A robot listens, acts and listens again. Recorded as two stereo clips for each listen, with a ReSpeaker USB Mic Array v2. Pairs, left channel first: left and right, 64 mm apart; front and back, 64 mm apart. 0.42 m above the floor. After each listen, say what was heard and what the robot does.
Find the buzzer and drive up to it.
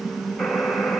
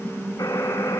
Drive 1.0 m forward.
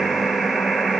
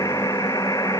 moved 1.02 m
Drive 1.0 m forward.
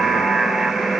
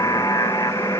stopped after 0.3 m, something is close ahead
Arrived at the buzzer, straight ahead.